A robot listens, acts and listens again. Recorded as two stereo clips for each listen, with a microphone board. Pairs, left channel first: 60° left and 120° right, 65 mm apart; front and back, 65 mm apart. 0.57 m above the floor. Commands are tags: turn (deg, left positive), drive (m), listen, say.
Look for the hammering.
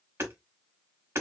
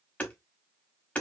<turn deg="-70"/>
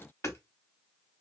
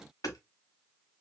<turn deg="20"/>
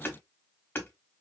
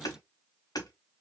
<say>Facing the hammering.</say>